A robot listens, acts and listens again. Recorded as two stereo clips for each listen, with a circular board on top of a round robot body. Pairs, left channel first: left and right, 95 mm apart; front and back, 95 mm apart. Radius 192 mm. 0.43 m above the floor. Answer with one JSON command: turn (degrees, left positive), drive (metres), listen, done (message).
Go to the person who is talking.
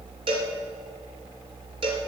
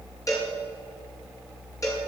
{"listen": true}
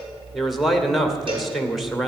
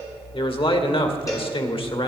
{"drive": 1.0}
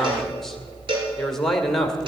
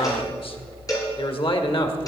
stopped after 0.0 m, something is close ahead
{"done": "Blocked. The man speaking is further on, straight ahead."}